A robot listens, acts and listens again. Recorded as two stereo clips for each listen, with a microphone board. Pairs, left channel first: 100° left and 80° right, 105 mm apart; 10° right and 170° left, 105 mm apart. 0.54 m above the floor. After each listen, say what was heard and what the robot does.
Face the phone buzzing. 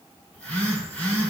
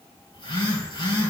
The phone buzzing: 25° left. Turn 25° left.
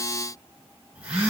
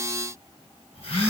Facing the phone buzzing, 2 to 4 m away.